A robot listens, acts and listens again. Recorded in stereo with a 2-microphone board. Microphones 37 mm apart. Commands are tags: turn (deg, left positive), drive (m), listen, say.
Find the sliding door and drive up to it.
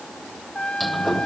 <turn deg="30"/>
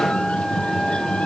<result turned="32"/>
<turn deg="150"/>
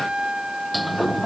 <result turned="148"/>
<drive m="1.0"/>
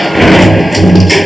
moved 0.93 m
<drive m="1.0"/>
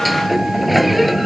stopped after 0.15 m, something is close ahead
<say>Arrived at the sliding door, straight ahead.</say>